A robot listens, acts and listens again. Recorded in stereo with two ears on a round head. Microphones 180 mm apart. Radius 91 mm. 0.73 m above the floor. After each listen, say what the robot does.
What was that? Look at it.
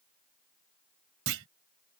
Turn 75° right.
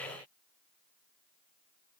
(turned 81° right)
Keep listening.
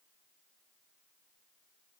I heard a clunk, but can't make it out now. It was about 5° left or 25° right.